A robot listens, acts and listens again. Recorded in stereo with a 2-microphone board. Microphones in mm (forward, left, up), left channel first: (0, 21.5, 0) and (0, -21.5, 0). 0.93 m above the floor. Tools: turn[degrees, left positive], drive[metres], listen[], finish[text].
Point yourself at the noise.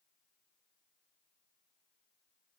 Action: listen[]
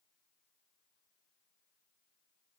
Action: listen[]
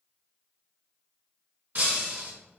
Thought: The breaking glass: about 40° right or 140° right.
Action: turn[-40]
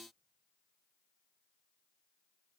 Action: listen[]
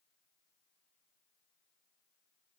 Action: finish[I heard breaking glass, but can't make it out now. It was about straight ahead or 100° right.]